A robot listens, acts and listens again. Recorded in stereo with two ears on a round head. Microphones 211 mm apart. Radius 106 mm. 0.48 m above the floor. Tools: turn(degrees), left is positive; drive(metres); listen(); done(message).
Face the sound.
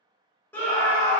turn(degrees=30)
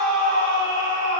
turn(degrees=140)
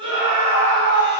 turn(degrees=-25)
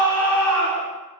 done("Facing the scream.")